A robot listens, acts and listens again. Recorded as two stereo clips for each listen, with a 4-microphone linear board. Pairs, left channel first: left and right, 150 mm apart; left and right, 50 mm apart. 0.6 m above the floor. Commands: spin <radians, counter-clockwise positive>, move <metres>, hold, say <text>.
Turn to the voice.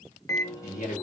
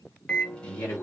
spin 1.05
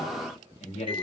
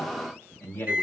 spin 0.87
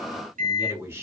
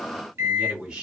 spin -0.35
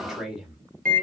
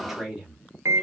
say Found it: a man speaking, straight ahead.